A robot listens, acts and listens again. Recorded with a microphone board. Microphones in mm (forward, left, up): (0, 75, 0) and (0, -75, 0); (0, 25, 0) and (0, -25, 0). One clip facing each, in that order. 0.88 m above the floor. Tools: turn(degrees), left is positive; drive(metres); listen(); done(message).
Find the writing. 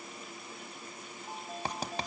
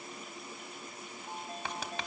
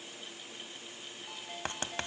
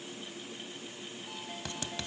turn(degrees=40)
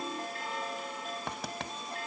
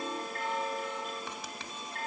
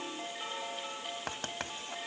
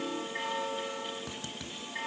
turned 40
turn(degrees=95)
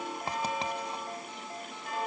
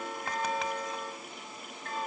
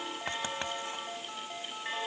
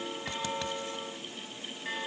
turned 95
listen()
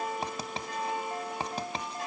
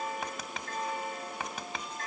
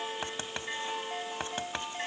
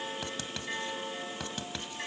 turn(degrees=35)
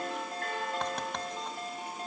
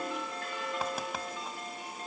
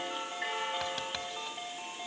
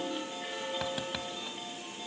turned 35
listen()
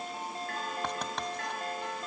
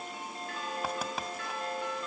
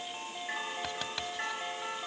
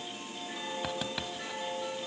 listen()
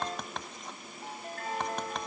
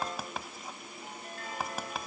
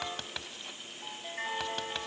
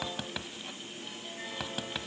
done("Facing the writing, 1 to 2 m away.")